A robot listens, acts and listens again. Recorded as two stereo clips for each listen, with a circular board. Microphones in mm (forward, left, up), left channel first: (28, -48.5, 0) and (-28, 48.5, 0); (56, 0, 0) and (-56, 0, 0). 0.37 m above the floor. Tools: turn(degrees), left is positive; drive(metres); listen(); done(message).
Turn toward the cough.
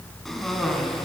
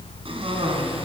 turn(degrees=-150)
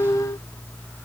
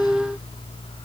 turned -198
turn(degrees=50)
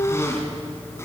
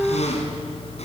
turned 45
done("Found it: a cough, straight ahead, over 4 m away.")